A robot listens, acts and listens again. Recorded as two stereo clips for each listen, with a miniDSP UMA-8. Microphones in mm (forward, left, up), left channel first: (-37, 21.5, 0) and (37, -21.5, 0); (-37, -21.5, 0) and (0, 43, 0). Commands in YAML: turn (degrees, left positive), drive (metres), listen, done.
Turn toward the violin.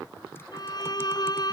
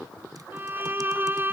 turn: 120
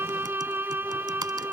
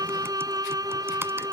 turn: 35
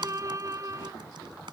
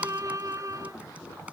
turn: 20
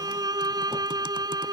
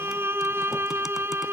done: "Facing the violin."